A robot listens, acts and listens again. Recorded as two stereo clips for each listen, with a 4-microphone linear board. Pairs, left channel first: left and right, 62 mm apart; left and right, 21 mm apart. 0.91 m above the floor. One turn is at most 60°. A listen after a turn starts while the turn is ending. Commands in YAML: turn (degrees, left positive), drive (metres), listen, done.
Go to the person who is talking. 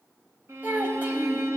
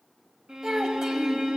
turn: -25
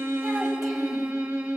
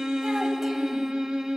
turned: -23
listen: true
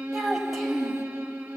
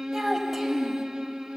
drive: 1.0
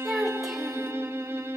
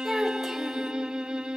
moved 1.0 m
drive: 1.0
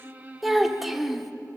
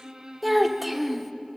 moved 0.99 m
drive: 1.0
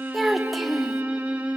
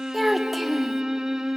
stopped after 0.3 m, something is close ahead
done: "I am next to the child speaking."